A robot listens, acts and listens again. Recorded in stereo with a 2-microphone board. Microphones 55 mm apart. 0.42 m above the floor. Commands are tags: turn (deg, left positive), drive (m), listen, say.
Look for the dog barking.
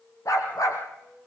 <turn deg="90"/>
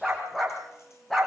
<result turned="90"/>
<say>Found it: a dog barking, straight ahead.</say>